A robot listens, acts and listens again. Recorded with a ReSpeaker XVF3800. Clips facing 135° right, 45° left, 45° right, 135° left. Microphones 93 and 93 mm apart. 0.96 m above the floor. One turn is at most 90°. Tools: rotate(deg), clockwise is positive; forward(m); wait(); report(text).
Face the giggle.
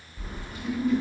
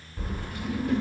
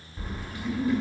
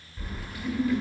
rotate(90)
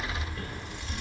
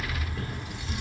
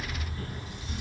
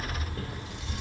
rotate(55)
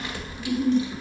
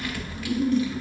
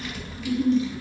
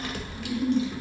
report("Found it: a giggle, straight ahead.")